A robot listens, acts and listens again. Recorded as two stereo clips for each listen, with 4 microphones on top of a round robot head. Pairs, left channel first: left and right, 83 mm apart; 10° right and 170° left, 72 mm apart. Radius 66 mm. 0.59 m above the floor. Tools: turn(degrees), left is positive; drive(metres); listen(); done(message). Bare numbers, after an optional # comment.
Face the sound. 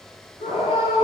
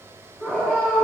# The scream: 65° left.
turn(65)
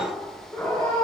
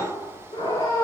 done("Facing the scream, over 4 m away.")